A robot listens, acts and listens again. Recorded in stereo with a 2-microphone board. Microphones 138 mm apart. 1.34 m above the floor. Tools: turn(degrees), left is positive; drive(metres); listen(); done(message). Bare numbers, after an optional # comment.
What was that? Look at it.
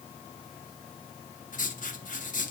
turn(90)
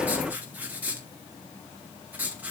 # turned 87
# So it is at 10° right.
turn(-10)
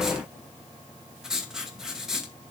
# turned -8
done("Found it: writing, straight ahead.")